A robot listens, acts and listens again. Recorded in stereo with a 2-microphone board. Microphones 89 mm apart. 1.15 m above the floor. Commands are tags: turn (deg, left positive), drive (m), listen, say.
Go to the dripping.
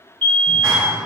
<listen/>
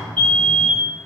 <listen/>
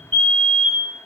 <say>I can't make out dripping, only a fire alarm and a clap.</say>